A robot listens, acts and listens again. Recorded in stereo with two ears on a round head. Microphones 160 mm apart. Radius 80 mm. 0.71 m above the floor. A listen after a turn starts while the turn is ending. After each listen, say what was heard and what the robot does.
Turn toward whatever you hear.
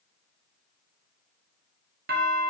The doorbell: about 55° right or 125° right. Turn 55° right.
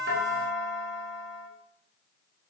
So it is at 40° right. Turn 40° right.
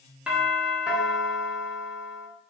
Found it: a doorbell, straight ahead.